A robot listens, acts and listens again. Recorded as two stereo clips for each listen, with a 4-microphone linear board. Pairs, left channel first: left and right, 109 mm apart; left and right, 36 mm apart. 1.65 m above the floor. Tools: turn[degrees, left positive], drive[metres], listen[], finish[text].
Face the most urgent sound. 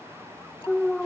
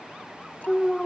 Action: turn[30]
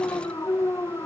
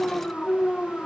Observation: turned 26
Thought: So it is at 150° left.
Action: turn[150]
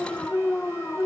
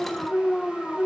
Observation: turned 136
Thought: The alarm is now 15° left.
Action: turn[15]
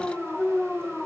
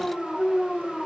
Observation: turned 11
Action: finish[Facing the alarm.]